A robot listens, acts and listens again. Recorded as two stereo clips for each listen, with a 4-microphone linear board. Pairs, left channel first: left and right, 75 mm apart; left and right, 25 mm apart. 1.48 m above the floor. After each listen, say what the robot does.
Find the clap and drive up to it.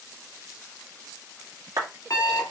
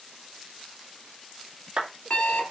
Turn 50° right.
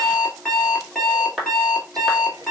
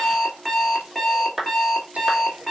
Drive 1.0 m forward.
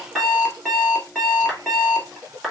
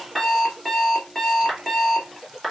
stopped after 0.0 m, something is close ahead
Something is in my way. I am facing the clap but have not reached it.